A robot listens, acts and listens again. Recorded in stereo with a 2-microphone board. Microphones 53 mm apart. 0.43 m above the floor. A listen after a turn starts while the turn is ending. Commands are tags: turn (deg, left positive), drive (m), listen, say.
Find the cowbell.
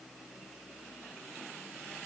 <listen/>
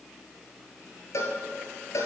<turn deg="70"/>
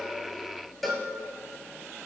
<say>Found it: a cowbell, straight ahead.</say>